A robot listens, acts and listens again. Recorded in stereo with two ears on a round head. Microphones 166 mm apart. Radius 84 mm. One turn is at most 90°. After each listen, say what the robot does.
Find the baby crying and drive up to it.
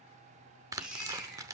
Turn 30° right.
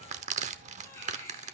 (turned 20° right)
Turn 15° left.
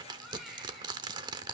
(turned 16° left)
Drive 1.0 m forward.
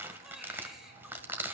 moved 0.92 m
Keep listening.
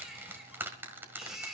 Drive 1.0 m forward.
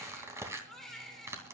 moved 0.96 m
Drive 1.0 m forward.
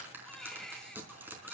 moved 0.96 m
Drive 1.0 m forward.
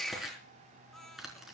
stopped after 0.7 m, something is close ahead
I am next to the baby crying.